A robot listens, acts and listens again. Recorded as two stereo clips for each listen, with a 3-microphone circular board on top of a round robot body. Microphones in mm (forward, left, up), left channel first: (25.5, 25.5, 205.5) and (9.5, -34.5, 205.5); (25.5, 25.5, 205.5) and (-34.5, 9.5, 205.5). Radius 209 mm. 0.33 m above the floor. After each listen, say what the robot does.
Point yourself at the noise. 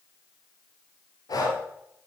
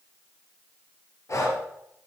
Turn 55° left.
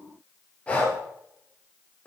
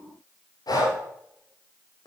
Found it: breathing, straight ahead.